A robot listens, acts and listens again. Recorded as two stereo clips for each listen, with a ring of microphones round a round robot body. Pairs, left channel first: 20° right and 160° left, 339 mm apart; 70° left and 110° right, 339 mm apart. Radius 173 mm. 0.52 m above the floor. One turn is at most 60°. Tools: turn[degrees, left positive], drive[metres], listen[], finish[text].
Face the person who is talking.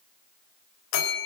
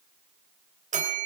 Action: listen[]
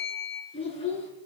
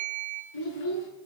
Thought: The child speaking: 50° left.
Action: turn[50]
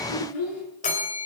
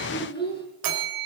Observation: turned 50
Action: finish[Found it: a child speaking, straight ahead.]